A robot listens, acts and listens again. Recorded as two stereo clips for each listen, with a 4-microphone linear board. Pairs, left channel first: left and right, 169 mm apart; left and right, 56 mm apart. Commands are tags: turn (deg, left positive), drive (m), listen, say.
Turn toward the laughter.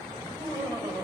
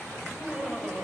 <turn deg="-20"/>
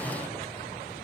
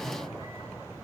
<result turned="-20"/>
<listen/>
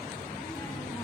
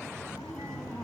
<listen/>
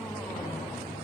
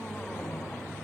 <say>I heard laughter, but can't make it out now. It was about straight ahead or 140° right.</say>